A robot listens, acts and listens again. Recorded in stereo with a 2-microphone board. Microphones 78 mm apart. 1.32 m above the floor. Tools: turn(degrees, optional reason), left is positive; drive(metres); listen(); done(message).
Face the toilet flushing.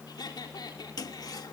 turn(degrees=60, reason="The toilet flushing: about 60° left or 120° left.")
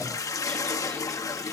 turn(degrees=55, reason="So it is at 55° left.")
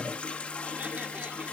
turn(degrees=20, reason="The toilet flushing is now 20° left.")
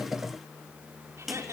done("Facing the toilet flushing, 1 to 2 m away.")